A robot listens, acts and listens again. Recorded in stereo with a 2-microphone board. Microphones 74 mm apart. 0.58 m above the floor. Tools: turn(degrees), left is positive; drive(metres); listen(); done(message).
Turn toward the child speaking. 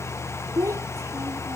turn(degrees=-40)
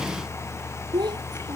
turn(degrees=-100)
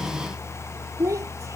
turn(degrees=-40)
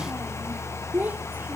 turn(degrees=-25)
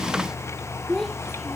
done("Facing the child speaking.")